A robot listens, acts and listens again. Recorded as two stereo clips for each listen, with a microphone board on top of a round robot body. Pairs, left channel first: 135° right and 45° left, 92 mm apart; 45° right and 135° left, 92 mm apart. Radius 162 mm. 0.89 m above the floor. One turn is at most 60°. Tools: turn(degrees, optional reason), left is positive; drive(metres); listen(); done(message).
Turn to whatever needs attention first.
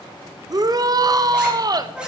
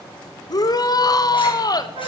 done("Facing the shout.")